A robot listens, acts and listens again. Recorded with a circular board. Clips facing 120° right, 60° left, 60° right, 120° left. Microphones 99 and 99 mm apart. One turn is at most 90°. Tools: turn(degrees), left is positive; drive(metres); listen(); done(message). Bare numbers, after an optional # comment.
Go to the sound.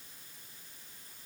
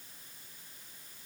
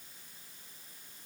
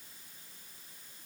listen()
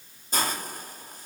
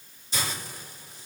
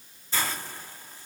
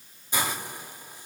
# The hiss: 165° right.
turn(-90)
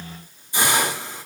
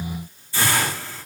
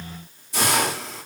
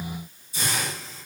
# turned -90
# The hiss is now 50° right.
turn(-50)
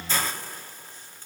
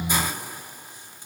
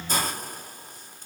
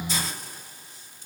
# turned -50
# The hiss is now 15° right.
turn(-15)
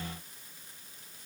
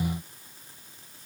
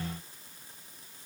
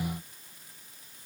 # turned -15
listen()
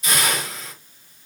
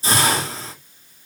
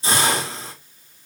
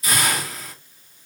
drive(1.0)
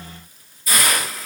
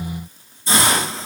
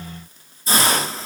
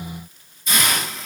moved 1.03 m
drive(1.0)
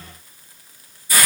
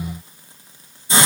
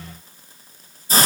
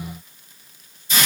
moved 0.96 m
drive(1.0)
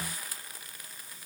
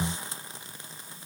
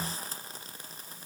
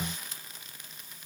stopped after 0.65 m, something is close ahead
listen()
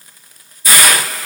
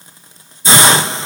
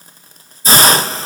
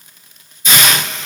done("Arrived at the hiss, straight ahead.")